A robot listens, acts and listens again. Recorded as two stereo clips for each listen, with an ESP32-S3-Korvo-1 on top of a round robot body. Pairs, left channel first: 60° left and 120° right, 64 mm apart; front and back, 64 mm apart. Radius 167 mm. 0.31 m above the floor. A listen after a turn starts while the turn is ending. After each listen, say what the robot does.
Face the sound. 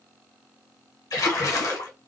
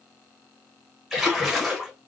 Turn 90° left.
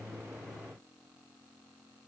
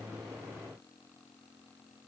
I heard a splash from this way, but can't make it out now.